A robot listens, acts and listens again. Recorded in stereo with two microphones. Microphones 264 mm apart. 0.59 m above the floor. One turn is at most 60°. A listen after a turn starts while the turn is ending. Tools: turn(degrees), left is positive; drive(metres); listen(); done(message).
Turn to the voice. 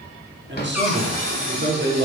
turn(degrees=-45)
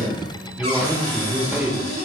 done("Facing the man speaking.")